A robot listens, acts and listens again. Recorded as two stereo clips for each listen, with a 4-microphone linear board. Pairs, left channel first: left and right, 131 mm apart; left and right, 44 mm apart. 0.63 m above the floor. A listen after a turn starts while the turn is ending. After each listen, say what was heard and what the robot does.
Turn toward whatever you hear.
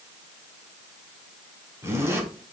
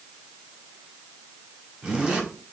The zipper: about 20° right or 160° right. Turn 20° right.
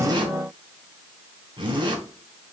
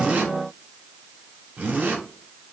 So it is at 145° right. Turn 145° right.
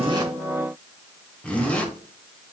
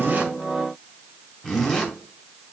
The zipper is now 10° left. Turn 10° left.
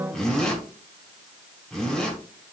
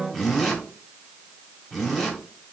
Facing the zipper.